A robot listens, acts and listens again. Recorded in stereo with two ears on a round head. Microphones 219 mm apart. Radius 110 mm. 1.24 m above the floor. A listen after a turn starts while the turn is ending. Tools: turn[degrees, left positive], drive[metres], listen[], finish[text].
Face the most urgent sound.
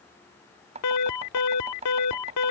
Action: turn[90]
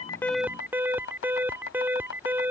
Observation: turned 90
Thought: So it is at 10° right.
Action: turn[-10]
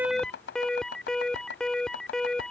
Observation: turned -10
Action: finish[Facing the alarm.]